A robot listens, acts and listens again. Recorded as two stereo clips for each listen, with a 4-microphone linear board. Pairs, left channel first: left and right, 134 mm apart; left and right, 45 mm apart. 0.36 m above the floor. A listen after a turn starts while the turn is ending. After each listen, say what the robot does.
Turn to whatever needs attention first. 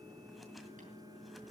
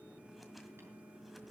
Keep listening.
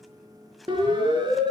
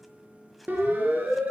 Turn 35° right.
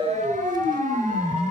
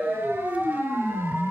Turn 110° right.
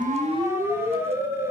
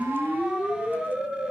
Turn 20° right.
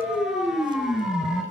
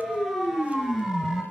Found it: a siren, straight ahead, over 4 m away.